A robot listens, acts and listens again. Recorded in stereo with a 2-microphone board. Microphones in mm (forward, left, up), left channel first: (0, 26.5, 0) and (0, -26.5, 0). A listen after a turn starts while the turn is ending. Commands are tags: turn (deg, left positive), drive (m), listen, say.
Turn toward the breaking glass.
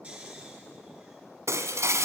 <turn deg="-70"/>
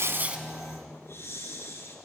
<listen/>
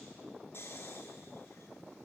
<say>I heard breaking glass, but can't make it out now. It was about straight ahead or 40° right.</say>